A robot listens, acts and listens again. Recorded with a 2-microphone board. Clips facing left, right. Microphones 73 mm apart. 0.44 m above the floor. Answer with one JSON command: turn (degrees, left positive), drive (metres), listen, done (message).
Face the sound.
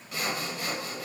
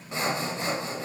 {"turn": -30}
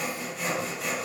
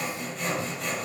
{"done": "Found it: sawing, straight ahead."}